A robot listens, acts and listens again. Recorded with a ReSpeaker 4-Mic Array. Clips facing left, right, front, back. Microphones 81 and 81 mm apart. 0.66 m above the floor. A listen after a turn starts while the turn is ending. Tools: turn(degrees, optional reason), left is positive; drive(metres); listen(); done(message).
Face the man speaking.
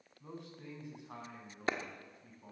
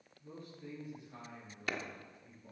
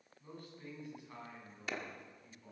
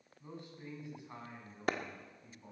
turn(degrees=115, reason="The man speaking: 115° left.")
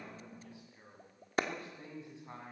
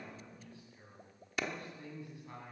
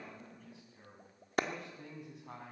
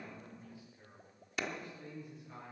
turn(degrees=20, reason="The man speaking is now 20° left.")
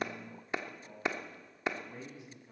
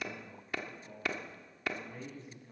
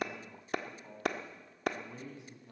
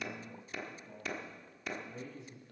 turn(degrees=10, reason="The man speaking is now 10° left.")
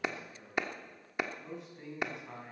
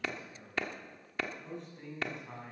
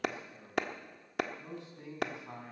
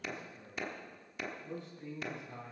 done("Facing the man speaking.")